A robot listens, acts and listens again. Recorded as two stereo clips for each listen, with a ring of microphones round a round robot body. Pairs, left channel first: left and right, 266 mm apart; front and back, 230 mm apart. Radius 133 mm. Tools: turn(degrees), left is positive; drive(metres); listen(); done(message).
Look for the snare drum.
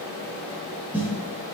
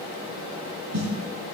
turn(degrees=-175)
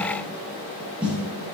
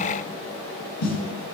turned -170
done("Facing the snare drum.")